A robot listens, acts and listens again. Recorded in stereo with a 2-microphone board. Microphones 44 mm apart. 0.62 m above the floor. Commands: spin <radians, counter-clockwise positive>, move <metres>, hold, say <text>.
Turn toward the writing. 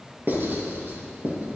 spin -0.96
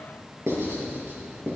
spin -1.22
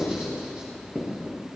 spin -0.35
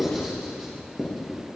say Found it: writing, straight ahead.